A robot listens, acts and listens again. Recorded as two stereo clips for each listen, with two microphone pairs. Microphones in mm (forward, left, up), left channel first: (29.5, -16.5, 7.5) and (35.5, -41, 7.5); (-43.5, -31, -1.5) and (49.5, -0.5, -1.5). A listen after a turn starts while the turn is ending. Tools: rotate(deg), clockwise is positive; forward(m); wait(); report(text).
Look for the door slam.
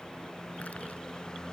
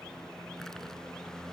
wait()
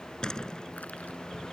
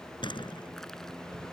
rotate(-165)
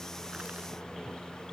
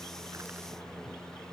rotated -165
report("I heard a door slam from this way, but can't make it out now.")